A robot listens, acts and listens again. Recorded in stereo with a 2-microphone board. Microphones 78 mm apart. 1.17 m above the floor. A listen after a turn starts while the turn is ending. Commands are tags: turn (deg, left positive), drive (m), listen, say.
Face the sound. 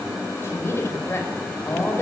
<turn deg="30"/>
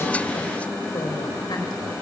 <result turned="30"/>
<listen/>
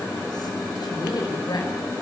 <turn deg="115"/>
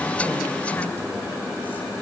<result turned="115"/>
<listen/>
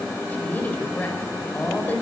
<turn deg="25"/>
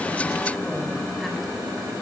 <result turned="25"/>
<listen/>
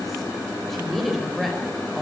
<say>Facing the woman speaking, over 4 m away.</say>